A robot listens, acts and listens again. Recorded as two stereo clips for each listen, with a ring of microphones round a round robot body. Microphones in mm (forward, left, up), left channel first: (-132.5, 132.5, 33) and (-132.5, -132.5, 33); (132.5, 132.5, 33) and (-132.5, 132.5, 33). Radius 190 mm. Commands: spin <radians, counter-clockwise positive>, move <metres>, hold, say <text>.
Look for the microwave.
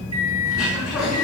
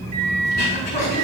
spin -2.79
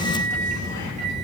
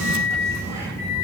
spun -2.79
spin -0.96
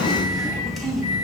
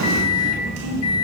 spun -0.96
spin 0.35
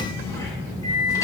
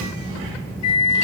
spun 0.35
spin 0.17
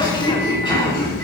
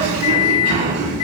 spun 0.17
say Found it: a microwave, straight ahead, 2 to 4 m away.